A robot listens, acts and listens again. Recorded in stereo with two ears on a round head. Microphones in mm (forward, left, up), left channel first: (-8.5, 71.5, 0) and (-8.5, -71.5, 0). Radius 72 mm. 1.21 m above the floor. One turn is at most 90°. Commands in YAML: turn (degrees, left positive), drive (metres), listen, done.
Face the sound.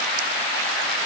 listen: true
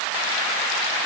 listen: true
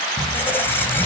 turn: 30
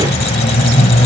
turn: 90
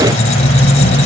turn: 45
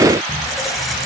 done: "Found it: a squeak, straight ahead."